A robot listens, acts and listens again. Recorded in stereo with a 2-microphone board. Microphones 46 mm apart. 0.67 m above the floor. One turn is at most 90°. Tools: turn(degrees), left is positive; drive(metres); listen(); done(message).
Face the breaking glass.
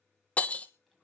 turn(degrees=25)
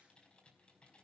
listen()
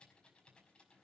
done("I heard breaking glass, but can't make it out now. It was about straight ahead or 130° left.")